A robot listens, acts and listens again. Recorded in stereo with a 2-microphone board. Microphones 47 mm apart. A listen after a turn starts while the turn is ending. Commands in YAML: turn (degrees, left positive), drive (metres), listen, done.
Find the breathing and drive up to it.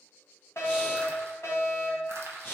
turn: 45
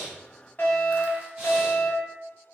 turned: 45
listen: true
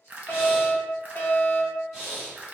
drive: 1.0
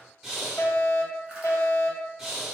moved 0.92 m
drive: 1.0
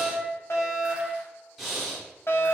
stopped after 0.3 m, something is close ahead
done: "Arrived at the breathing, straight ahead."